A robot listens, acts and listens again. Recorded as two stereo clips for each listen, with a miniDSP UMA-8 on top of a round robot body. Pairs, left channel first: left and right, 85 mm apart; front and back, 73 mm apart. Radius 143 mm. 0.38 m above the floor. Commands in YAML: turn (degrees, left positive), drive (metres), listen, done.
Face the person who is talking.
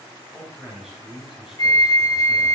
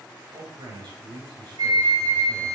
turn: -175
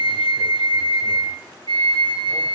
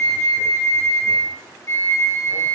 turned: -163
turn: -10
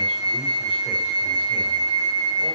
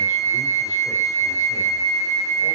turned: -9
listen: true
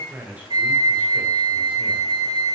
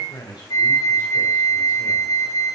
turn: -20
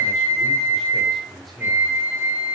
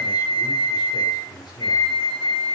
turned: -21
done: "Found it: a man speaking, straight ahead, 2 to 4 m away."